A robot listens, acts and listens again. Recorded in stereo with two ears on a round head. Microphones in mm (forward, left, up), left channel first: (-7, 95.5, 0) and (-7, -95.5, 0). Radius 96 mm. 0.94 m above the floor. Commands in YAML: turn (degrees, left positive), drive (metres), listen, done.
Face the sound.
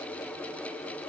listen: true
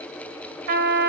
turn: -45
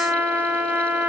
done: "Found it: a trumpet, straight ahead, 1 to 2 m away."